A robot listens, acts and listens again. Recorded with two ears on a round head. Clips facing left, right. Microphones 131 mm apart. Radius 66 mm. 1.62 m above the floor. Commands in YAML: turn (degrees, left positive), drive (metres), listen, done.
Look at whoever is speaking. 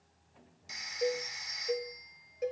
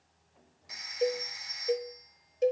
listen: true
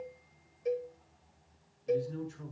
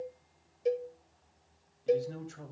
turn: -70
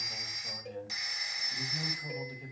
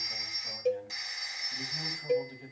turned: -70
done: "Facing the man speaking."